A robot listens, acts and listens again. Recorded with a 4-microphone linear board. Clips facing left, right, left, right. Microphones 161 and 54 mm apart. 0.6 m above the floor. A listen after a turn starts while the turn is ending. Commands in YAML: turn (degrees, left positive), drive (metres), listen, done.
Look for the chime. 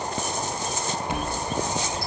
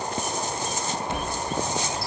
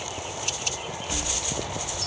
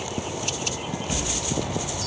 turn: 30
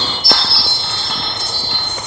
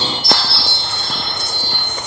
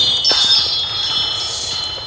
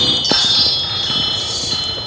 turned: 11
done: "Facing the chime."